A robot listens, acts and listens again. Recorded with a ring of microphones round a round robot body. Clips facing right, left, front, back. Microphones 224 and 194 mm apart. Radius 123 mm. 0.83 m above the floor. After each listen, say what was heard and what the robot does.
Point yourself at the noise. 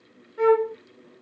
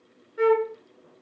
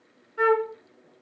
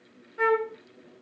Facing the flute.